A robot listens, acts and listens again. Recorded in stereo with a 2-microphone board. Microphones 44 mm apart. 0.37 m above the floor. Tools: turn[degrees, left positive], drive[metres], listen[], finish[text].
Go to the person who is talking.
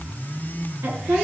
Thought: The woman speaking: about 75° right or 105° right.
Action: turn[-75]
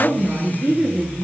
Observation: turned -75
Thought: So it is at 25° right.
Action: turn[-25]
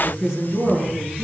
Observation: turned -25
Action: drive[1.0]
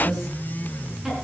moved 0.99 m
Thought: The woman speaking is now 10° right.
Action: turn[-10]
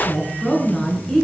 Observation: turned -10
Action: drive[1.0]
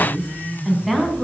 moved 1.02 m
Action: drive[1.0]
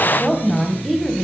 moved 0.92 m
Action: drive[1.0]
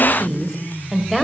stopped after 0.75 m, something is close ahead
Action: finish[I am next to the woman speaking.]